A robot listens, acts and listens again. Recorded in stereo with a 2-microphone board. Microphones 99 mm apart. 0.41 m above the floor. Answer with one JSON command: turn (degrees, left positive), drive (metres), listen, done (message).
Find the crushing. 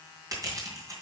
{"turn": -40}
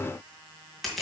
{"done": "Facing the crushing, 2 to 4 m away."}